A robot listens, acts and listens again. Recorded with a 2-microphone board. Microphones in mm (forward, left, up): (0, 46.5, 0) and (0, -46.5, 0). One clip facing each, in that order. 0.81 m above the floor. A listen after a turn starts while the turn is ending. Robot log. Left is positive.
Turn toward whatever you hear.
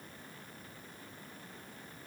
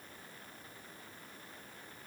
cmd idle
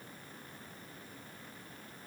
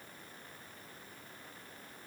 cmd idle
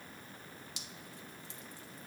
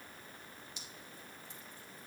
note: The dripping: about 70° left or 110° left.
cmd yaw +70
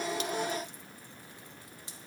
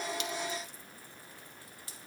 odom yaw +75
note: So it is at 20° left.
cmd yaw +20
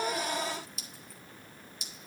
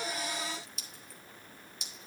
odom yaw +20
end: Facing the dripping, 1 to 2 m away.